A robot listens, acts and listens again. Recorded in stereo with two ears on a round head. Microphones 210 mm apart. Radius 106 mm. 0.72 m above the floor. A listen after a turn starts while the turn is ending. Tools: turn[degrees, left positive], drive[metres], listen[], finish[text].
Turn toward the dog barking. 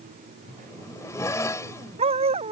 Thought: The dog barking: about 25° right or 155° right.
Action: turn[-25]
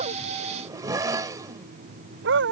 Thought: So it is at 125° right.
Action: turn[-125]
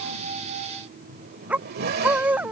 Action: finish[Found it: a dog barking, straight ahead.]